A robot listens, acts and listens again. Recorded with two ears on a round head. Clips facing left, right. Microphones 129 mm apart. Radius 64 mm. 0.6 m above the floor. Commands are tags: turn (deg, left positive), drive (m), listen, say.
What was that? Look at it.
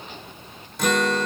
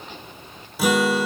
<turn deg="-30"/>
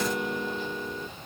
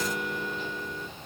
<turn deg="20"/>
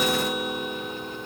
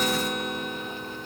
<say>Facing the guitar, under 1 m away.</say>